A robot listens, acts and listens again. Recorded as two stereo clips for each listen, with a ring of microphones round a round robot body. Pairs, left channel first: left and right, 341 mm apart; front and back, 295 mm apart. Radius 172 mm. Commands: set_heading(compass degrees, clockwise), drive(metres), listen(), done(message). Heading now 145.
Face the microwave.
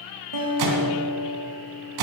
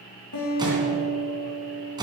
set_heading(250)
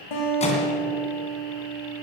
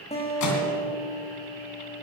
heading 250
set_heading(230)
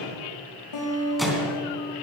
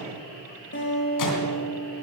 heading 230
done("Facing the microwave, 2 to 4 m away.")